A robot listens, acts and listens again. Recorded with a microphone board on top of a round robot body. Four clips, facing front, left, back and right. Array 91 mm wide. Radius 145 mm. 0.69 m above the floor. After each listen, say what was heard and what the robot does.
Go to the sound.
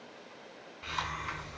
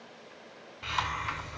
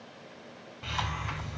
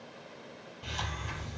The hiss: 80° left. Turn 80° left.
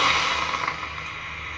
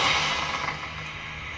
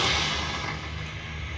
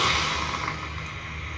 Drive 1.0 m forward.
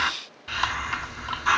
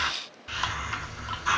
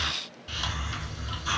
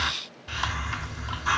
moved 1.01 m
Drive 1.0 m forward.
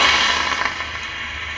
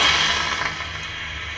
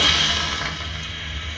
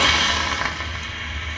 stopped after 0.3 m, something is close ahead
Arrived at the hiss, straight ahead.